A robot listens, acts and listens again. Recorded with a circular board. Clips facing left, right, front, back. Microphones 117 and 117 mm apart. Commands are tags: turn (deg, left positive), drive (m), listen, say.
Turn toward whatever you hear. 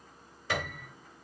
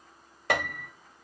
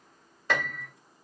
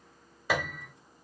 <turn deg="-100"/>
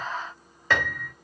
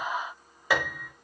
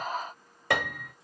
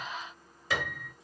<turn deg="-10"/>
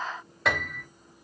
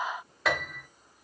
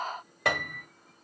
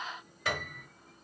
<say>Found it: a piano, straight ahead.</say>